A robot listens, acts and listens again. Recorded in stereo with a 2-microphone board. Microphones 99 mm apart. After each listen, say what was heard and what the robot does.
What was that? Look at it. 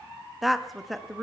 Turn 30° left.
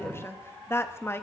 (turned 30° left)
So it is at 150° left. Turn 150° left.
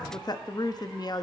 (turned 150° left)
The woman speaking is now 50° left. Turn 50° left.
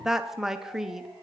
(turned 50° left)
Facing the woman speaking.